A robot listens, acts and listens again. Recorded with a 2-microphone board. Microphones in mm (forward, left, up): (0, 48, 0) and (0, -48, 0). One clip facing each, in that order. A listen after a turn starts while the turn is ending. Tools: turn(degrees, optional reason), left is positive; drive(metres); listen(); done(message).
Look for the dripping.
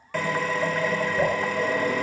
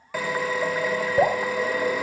turn(degrees=-90)
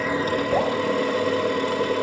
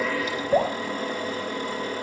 done("Found it: dripping, straight ahead.")